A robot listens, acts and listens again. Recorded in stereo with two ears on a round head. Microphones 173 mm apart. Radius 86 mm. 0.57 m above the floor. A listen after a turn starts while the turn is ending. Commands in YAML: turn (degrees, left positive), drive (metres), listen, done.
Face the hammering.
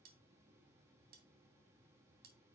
listen: true
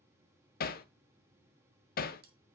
turn: 45
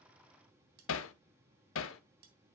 turn: 85
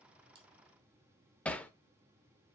done: "Found it: hammering, straight ahead, under 1 m away."